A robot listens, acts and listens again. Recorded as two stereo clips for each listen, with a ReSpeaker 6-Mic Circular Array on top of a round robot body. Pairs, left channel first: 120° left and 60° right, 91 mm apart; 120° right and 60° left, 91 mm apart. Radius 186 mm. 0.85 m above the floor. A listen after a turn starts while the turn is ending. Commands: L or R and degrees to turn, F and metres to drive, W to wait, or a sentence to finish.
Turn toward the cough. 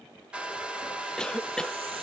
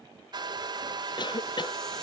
R160
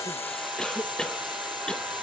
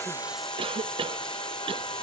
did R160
L35
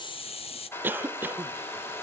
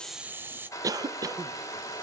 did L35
L10
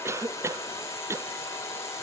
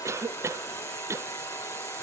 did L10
Facing the cough.